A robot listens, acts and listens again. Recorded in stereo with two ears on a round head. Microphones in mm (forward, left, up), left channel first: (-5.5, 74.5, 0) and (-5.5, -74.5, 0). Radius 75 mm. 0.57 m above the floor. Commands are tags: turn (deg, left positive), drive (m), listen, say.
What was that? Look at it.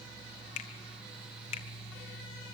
<turn deg="40"/>
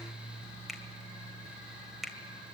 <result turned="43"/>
<say>Facing the finger snap, 1 to 2 m away.</say>